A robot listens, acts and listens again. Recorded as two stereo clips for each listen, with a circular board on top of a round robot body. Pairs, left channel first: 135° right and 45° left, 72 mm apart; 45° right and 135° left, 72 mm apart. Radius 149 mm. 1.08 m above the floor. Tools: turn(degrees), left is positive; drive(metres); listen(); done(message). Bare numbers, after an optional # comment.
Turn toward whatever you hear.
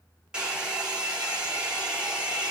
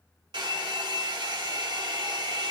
# The hair dryer: 120° left.
turn(120)
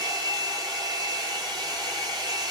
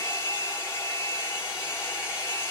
# The hair dryer is now 10° left.
turn(10)
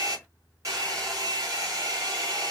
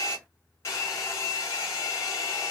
done("Found it: a hair dryer, straight ahead.")